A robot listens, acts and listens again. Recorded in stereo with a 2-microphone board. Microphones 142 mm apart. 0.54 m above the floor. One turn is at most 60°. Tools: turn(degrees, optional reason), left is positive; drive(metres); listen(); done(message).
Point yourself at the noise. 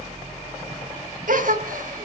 turn(degrees=-60, reason="The gasp: about 75° right or 105° right.")
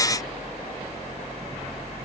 listen()
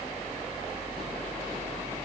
done("I heard a gasp, but can't make it out now. It was about 15° right or 45° right.")